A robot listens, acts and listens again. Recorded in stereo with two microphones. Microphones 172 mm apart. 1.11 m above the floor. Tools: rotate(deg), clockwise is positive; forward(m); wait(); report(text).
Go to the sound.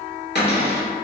rotate(-75)
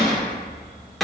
forward(1.0)
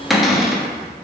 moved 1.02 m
forward(1.0)
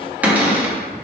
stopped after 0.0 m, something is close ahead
rotate(10)
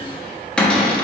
report("Arrived at the cupboard door, straight ahead.")